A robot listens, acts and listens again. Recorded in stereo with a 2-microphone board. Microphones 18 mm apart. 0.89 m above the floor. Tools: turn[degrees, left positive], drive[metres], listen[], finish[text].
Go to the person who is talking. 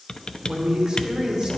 Thought: The man speaking: about 40° right or 140° right.
Action: turn[-40]
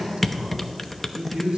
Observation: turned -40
Thought: So it is at 100° right.
Action: turn[-100]
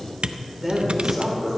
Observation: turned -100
Action: drive[1.0]
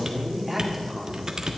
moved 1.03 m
Thought: The man speaking is now 10° right.
Action: turn[-10]
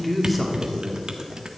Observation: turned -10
Action: drive[1.0]
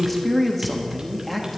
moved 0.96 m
Action: drive[1.0]
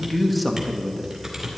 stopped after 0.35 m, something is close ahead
Action: finish[I am next to the man speaking.]